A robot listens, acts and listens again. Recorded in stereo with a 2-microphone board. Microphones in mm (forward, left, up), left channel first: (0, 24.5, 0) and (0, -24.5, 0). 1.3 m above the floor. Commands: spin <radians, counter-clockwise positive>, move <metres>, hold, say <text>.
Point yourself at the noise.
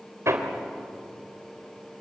spin -1.31
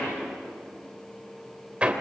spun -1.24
spin -0.44
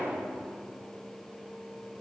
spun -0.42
hold
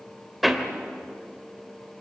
say Facing the hammering, 2 to 4 m away.